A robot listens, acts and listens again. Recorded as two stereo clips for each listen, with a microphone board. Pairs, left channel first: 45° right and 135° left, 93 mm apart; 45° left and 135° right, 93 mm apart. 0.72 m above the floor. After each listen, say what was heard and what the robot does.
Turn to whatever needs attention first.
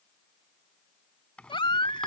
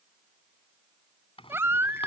The baby crying: 70° right. Turn 70° right.
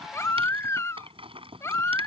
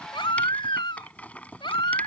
The baby crying is now 15° left. Turn 15° left.
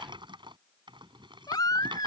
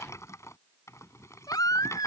Found it: a baby crying, straight ahead.